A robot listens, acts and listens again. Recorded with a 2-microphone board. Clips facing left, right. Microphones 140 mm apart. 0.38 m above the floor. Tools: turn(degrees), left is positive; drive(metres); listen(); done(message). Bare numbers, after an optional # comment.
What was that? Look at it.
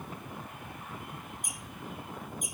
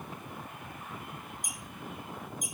# The squeak: about 60° left or 120° left.
turn(60)
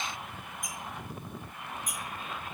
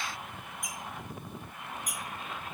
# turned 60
# So it is at 35° left.
turn(35)
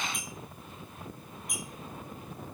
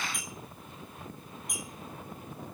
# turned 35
done("Found it: a squeak, straight ahead, 1 to 2 m away.")